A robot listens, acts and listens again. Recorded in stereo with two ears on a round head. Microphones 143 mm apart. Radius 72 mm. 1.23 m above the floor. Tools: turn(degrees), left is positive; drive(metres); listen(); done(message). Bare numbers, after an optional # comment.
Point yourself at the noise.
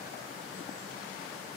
listen()
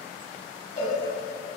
# The cowbell: about 40° left or 140° left.
turn(40)
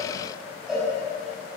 done("Facing the cowbell, over 4 m away.")